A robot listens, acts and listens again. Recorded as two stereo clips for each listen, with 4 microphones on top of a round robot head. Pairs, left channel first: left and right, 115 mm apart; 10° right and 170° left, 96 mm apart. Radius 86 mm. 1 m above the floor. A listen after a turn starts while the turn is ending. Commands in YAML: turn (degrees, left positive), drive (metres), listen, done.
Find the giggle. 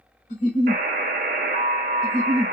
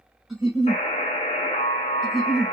turn: 85
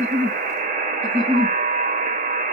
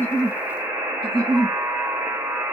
turn: 30
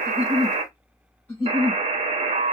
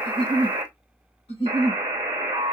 turn: 10
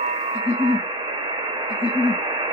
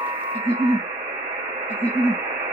done: "Facing the giggle."